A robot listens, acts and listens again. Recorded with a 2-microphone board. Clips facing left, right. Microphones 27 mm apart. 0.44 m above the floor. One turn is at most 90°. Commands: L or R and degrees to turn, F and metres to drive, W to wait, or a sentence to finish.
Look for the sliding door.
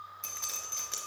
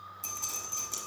W
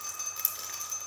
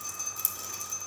W
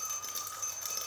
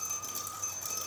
I can't make out a sliding door, only dripping.